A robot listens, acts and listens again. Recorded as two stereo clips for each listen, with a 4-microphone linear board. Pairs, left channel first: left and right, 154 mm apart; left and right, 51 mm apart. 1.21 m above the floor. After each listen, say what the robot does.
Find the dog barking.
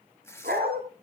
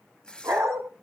Turn 90° right.
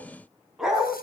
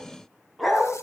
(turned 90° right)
Facing the dog barking.